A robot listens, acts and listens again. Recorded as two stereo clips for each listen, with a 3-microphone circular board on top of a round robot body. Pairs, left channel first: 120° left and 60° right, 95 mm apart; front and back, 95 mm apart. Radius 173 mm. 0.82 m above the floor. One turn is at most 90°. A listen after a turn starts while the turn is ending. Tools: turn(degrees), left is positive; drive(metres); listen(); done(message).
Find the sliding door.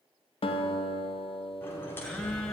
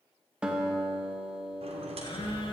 turn(degrees=-90)
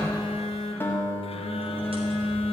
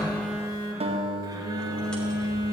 turn(degrees=-80)
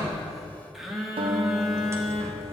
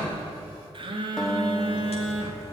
done("Facing the sliding door.")